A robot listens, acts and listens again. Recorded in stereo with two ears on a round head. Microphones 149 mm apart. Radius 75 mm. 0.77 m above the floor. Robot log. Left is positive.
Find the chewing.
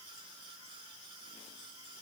cmd idle
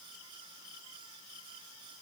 cmd idle
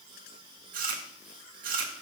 note: The chewing: about 55° right or 125° right.
cmd yaw -55
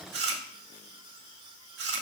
note: So it is at 75° right.
cmd yaw -75
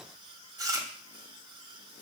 note: The chewing is now 20° right.
cmd yaw -20
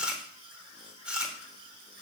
end: Facing the chewing, 1 to 2 m away.